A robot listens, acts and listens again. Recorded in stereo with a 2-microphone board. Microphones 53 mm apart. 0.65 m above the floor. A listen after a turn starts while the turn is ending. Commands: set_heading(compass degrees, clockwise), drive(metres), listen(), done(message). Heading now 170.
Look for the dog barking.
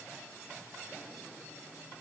listen()
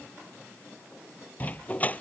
set_heading(140)
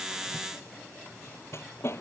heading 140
set_heading(15)
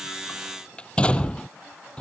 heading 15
set_heading(355)
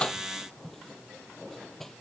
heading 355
listen()
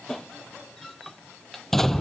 done("Found it: a dog barking, straight ahead.")